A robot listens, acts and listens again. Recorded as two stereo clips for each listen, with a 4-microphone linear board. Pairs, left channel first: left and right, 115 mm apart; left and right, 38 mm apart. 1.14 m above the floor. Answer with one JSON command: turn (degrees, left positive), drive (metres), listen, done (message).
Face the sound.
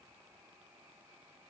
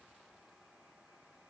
{"listen": true}
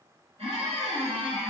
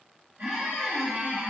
{"turn": -60}
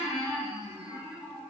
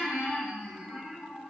{"turn": -30}
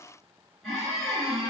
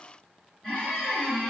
{"done": "Found it: a squeak, straight ahead, 1 to 2 m away."}